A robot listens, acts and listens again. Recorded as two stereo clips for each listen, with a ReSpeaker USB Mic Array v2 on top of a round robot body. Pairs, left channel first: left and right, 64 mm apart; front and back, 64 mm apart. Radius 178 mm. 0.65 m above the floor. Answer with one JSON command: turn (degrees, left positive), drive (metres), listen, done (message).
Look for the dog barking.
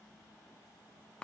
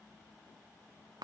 {"listen": true}
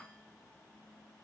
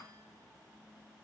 {"listen": true}
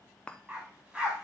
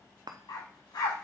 {"turn": -15}
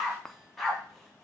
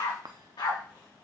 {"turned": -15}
{"done": "Found it: a dog barking, straight ahead, 2 to 4 m away."}